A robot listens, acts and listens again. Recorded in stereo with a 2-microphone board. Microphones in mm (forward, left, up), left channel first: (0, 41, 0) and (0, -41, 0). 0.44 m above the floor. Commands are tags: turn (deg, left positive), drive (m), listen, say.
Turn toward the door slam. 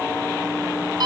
<listen/>
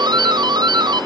<listen/>
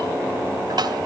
<say>I can't make out a door slam to turn to.</say>